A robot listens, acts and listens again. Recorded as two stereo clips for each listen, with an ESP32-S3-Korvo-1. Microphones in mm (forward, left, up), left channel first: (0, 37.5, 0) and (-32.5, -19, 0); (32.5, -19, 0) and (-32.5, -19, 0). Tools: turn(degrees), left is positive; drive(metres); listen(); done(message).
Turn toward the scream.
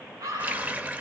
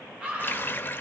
turn(degrees=-105)
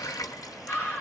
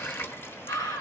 done("Found it: a scream, straight ahead.")